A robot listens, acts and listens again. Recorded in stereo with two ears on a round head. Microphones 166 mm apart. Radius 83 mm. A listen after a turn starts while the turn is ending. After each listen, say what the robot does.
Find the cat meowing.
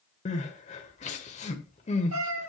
Turn 90° right.
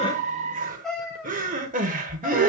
Found it: a cat meowing, straight ahead, over 4 m away.